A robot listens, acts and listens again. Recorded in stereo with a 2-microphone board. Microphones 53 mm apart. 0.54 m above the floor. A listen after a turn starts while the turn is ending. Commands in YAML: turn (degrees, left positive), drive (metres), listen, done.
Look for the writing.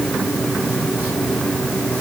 listen: true
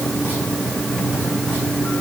listen: true
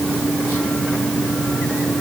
done: "I can't make out writing to turn to."